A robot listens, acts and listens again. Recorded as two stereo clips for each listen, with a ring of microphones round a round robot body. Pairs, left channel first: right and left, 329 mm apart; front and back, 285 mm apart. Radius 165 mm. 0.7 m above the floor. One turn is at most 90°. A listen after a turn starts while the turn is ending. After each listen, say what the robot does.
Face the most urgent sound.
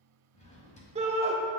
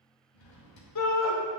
Turn 20° left.
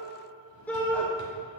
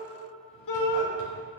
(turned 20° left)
Facing the shout.